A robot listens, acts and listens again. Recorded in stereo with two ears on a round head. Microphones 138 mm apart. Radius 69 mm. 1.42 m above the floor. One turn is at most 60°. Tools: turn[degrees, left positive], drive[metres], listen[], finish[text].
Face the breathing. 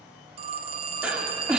Action: turn[-30]
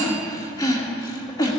Thought: So it is at 25° left.
Action: turn[25]
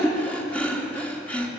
Thought: The breathing is now 10° left.
Action: turn[10]
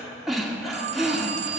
Action: finish[Facing the breathing, 1 to 2 m away.]